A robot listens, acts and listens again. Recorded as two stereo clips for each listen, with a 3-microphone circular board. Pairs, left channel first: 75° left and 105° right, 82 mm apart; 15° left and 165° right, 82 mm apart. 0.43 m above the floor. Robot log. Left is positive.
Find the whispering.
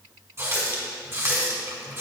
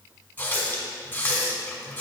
cmd idle
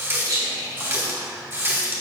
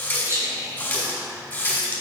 note: The whispering: 125° right.
cmd yaw -125
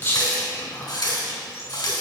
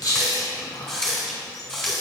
note: The whispering is now 25° left.
cmd yaw +25
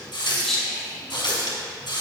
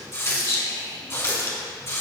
note: The whispering is now 10° right.
cmd yaw -10
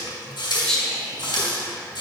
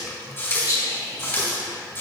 end: Found it: whispering, straight ahead, 1 to 2 m away.